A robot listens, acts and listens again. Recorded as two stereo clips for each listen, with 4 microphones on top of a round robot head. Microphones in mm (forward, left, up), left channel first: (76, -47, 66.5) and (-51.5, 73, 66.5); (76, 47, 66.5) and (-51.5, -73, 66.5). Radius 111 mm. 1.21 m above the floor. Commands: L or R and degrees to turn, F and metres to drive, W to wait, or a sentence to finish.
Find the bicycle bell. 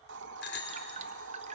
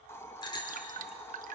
R25
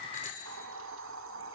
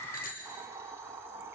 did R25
Found it: a bicycle bell, straight ahead.